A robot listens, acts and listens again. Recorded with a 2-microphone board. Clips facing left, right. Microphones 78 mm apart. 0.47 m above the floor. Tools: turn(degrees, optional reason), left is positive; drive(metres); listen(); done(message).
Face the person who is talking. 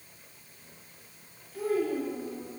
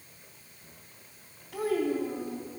turn(degrees=-90)
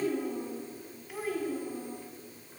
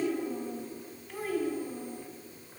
done("Found it: a child speaking, straight ahead, 2 to 4 m away.")